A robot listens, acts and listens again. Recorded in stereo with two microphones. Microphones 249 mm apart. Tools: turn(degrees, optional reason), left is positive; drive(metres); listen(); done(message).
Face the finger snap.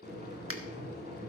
turn(degrees=-60, reason="The finger snap: about 60° right or 120° right.")
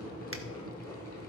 listen()
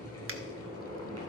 listen()
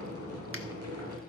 done("I heard a finger snap, but can't make it out now. It was about straight ahead or 60° right.")